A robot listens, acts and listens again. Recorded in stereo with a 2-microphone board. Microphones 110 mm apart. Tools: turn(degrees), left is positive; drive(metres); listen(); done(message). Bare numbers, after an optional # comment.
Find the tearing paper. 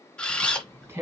# The tearing paper: about 25° right or 155° right.
turn(-25)
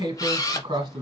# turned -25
# So it is at 125° right.
turn(-125)
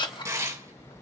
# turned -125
# The tearing paper is now 25° right.
turn(-25)
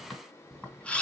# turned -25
# The tearing paper is now 10° left.
turn(10)
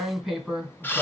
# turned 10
done("Found it: tearing paper, straight ahead, 2 to 4 m away.")